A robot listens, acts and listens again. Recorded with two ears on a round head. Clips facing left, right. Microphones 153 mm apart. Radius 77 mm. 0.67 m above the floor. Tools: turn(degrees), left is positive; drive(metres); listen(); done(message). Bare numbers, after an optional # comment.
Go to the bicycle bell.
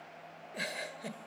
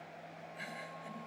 listen()
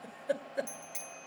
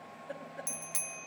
# The bicycle bell: about 70° right or 110° right.
turn(-70)
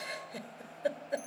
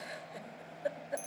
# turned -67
listen()
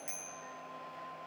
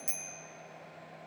# So it is at 35° right.
turn(-35)
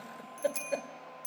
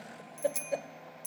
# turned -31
drive(1.0)
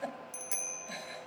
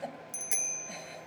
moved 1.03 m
# The bicycle bell is now 15° right.
turn(-15)
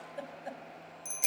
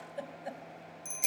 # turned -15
drive(1.0)
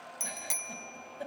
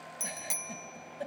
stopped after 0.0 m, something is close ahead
done("Arrived at the bicycle bell, straight ahead.")